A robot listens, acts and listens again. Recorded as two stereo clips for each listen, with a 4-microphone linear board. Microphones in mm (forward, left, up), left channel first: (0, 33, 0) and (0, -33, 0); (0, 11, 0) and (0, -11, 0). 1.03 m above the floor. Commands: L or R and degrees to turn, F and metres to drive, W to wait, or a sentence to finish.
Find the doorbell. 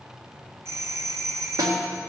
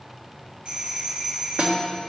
R45
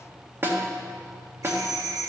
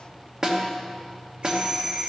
R80
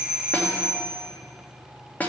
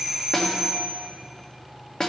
R20
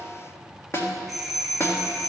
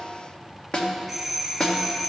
Facing the doorbell.